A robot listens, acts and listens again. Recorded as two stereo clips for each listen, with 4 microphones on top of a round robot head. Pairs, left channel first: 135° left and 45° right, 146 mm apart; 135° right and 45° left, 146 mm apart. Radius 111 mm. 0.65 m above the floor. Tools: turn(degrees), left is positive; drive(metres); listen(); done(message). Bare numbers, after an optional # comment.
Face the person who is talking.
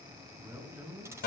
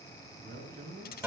# The man speaking: 30° left.
turn(30)
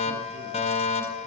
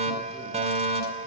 listen()
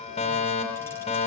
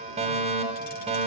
listen()
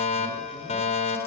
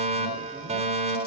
done("Facing where the man speaking came from. I can't hear it now.")